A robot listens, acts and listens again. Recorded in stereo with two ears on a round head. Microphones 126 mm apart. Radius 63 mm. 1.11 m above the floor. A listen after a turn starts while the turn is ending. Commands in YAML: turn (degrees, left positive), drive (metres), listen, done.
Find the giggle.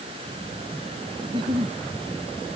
turn: -35
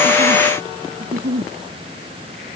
turn: -105
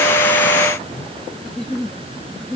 done: "Found it: a giggle, straight ahead."